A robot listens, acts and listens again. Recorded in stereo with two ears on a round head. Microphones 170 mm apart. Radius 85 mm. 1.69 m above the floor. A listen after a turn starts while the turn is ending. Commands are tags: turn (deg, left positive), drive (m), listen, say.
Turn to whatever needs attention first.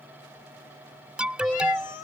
<turn deg="-30"/>
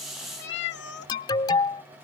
<turn deg="25"/>
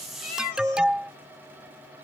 <say>Found it: an alarm, straight ahead.</say>